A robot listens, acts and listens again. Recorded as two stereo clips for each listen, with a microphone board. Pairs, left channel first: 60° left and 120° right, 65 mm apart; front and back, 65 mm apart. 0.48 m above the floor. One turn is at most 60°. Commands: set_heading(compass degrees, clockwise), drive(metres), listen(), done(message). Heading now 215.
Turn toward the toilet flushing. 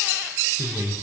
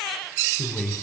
listen()
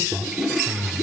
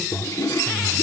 set_heading(255)
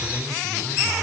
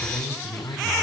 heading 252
listen()
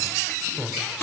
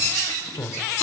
listen()
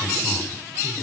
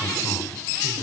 done("I heard a toilet flushing from this way, but can't make it out now.")